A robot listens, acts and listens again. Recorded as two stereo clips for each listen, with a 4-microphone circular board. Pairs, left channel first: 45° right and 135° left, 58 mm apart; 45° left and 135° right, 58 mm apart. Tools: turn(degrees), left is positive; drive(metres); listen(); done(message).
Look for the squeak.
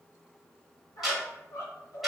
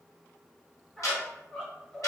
turn(degrees=-35)
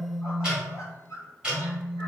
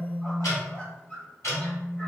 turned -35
turn(degrees=-20)
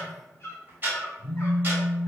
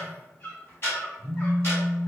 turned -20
done("Facing the squeak.")